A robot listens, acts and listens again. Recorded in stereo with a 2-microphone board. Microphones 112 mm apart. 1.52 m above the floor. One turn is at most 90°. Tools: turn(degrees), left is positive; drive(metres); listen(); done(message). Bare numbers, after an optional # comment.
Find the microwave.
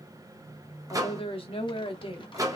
# The microwave: about 30° right or 150° right.
turn(-30)
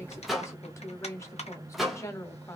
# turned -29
done("Facing the microwave.")